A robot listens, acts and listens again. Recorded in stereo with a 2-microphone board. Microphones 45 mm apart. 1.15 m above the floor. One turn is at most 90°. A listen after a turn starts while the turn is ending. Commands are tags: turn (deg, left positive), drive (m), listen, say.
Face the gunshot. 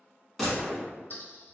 <turn deg="30"/>
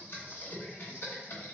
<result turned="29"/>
<listen/>
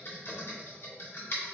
<say>I heard a gunshot, but can't make it out now. It was about 30° right or 150° left.</say>